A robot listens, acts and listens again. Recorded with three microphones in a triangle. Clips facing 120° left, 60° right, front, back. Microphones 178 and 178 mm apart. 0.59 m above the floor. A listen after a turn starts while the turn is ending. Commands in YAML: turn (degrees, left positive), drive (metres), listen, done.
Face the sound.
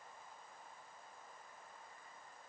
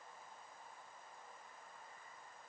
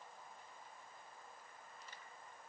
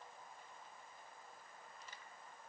listen: true
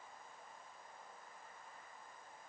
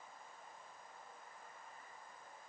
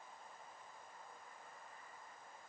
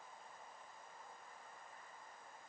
listen: true
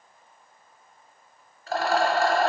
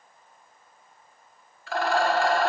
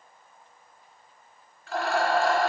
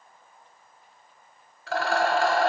turn: 170
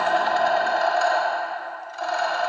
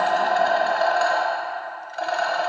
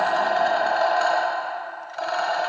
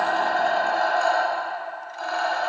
turn: -25
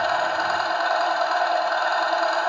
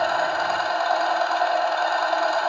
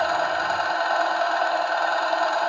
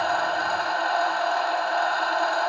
turn: 10
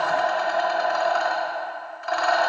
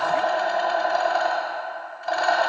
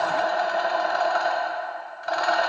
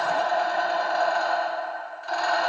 done: "Found it: a rattle, straight ahead, under 1 m away."